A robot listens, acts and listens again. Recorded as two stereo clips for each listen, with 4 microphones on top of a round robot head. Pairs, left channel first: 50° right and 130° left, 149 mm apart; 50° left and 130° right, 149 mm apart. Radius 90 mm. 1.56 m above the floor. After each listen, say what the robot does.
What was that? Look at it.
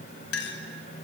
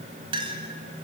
Turn 70° right.
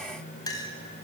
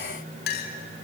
Turn 20° left.
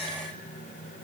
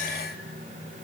Keep listening.
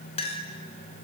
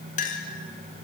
Found it: a clink, straight ahead, 2 to 4 m away.